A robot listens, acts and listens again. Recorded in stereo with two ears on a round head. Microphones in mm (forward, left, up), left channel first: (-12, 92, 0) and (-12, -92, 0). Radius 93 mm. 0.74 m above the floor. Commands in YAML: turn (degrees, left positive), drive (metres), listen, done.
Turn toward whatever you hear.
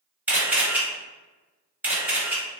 turn: -30
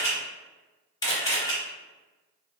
turn: 20
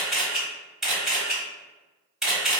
done: "Facing the camera shutter, 1 to 2 m away."